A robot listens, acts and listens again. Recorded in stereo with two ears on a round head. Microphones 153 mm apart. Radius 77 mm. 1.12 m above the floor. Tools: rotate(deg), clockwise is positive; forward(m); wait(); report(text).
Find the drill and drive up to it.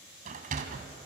wait()
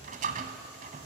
wait()
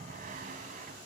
report("I can't make out a drill to turn to.")